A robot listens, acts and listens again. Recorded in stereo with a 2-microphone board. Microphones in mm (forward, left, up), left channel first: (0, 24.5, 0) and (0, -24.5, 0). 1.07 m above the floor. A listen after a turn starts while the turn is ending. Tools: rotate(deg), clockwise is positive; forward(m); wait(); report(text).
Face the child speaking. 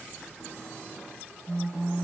wait()
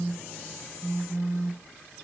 wait()
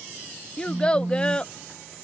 rotate(-20)
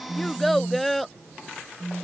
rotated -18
report("Facing the child speaking.")